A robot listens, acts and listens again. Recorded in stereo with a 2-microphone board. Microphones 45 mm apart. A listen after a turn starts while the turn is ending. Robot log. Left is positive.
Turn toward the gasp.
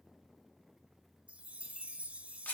cmd idle
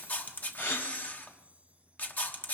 cmd yaw +90
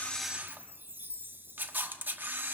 end: Facing where the gasp came from. I can't hear it now.